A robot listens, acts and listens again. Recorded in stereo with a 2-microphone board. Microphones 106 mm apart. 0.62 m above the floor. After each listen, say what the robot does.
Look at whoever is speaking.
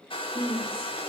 Turn 60° left.
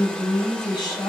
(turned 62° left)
Turn 45° left.
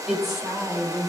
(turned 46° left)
Facing the woman speaking.